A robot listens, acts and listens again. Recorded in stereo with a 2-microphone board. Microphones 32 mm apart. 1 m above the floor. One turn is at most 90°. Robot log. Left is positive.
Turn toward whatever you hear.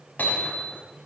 cmd yaw +90
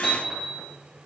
end: Found it: hammering, straight ahead.